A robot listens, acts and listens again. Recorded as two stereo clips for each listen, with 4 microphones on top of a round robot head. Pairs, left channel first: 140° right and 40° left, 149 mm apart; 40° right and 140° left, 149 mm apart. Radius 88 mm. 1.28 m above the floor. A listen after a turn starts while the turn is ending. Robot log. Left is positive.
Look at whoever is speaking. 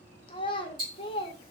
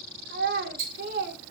note: The child speaking: 165° left.
cmd yaw +165
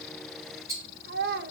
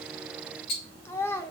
note: The child speaking is now 30° left.
cmd yaw +30
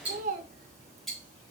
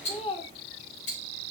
note: The child speaking is now 10° left.
cmd yaw +10
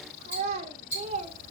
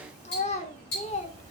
end: Facing the child speaking.